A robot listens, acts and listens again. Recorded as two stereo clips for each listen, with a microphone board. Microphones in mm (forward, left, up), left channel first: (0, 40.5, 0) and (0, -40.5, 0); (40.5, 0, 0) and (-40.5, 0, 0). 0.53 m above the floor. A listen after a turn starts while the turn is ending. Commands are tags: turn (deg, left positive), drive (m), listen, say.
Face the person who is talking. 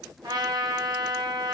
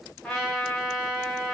<listen/>
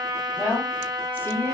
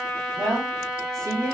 <turn deg="150"/>
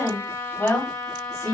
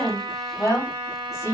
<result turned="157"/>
<turn deg="50"/>
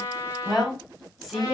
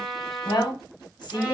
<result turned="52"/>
<say>Found it: a woman speaking, straight ahead.</say>